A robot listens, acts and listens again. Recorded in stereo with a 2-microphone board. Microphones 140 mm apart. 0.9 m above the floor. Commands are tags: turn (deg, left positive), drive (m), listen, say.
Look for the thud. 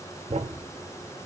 <turn deg="-55"/>
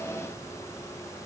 <listen/>
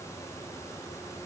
<say>I heard a thud, but can't make it out now. It was about straight ahead or 70° right.</say>